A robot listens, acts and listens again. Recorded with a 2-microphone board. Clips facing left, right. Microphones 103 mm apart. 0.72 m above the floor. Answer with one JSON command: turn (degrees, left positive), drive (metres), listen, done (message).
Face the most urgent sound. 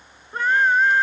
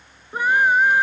{"turn": -30}
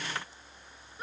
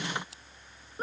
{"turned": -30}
{"turn": -140}
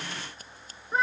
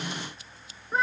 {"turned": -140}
{"done": "Facing the scream."}